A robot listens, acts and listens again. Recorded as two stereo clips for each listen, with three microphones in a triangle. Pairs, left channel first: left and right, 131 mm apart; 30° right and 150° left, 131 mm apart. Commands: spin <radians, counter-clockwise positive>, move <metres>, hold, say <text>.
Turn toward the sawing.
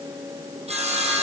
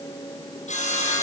spin -0.96
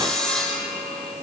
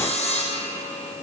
say Facing the sawing.